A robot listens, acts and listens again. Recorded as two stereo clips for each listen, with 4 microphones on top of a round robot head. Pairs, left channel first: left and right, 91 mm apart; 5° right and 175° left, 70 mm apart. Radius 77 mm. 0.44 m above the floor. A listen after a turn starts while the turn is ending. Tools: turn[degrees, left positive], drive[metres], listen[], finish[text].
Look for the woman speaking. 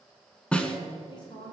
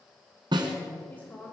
Thought: The woman speaking: 65° left.
Action: turn[65]
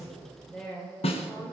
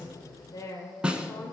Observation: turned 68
Thought: The woman speaking is now 15° left.
Action: turn[15]
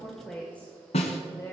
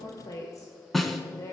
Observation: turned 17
Thought: The woman speaking is now 35° left.
Action: turn[35]
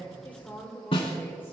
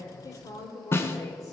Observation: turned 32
Thought: The woman speaking is now 15° left.
Action: turn[15]
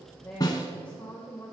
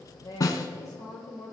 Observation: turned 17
Thought: The woman speaking is now 15° left.
Action: turn[15]
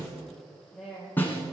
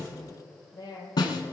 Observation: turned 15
Action: finish[Facing the woman speaking, 2 to 4 m away.]